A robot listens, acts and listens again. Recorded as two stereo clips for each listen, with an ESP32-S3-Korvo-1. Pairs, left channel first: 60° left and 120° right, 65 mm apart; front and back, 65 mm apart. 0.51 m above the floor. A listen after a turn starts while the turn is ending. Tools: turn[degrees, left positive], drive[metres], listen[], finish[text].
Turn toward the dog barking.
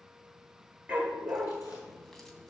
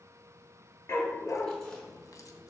Thought: The dog barking: 50° right.
Action: turn[-50]
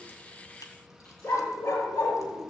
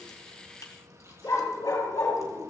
Thought: The dog barking is now 20° left.
Action: turn[20]
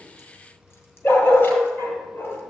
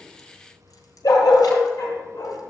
Action: finish[Facing the dog barking.]